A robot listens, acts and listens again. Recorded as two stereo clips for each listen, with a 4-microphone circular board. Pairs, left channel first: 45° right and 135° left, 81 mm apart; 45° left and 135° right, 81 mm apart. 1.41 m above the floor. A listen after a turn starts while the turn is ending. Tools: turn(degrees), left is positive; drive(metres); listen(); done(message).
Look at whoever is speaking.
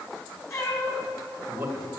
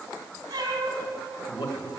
turn(degrees=80)
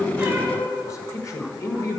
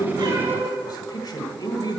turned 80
done("Facing the man speaking.")